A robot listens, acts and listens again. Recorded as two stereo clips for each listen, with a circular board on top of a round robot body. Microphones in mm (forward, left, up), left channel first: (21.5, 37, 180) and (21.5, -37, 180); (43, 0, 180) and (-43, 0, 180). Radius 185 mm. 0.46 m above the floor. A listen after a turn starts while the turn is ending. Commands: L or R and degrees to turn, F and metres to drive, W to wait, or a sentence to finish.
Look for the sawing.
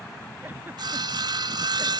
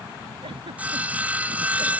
R105
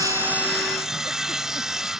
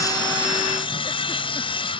Facing the sawing.